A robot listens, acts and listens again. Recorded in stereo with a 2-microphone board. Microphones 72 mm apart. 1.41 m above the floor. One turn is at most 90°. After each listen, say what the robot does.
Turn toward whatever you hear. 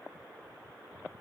Keep listening.
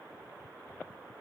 Keep listening.
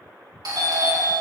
Turn 65° right.
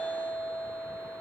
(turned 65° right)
Turn 50° right.
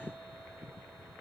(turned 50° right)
Keep listening.
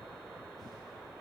Keep listening.
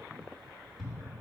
Facing the doorbell, 2 to 4 m away.